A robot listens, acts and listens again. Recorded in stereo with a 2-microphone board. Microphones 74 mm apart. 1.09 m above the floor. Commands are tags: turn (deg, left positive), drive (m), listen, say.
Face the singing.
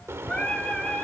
<turn deg="30"/>
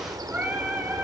<turn deg="-25"/>
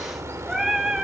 <turn deg="-10"/>
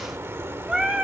<turn deg="-10"/>
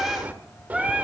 <turn deg="-10"/>
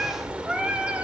<turn deg="-15"/>
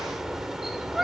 <say>Found it: singing, straight ahead.</say>